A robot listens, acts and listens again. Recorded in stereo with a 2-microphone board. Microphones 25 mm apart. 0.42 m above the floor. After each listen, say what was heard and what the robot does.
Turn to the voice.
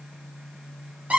Keep listening.
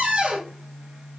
Keep listening.
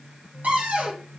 I can't make out anyone speaking, only a cupboard door.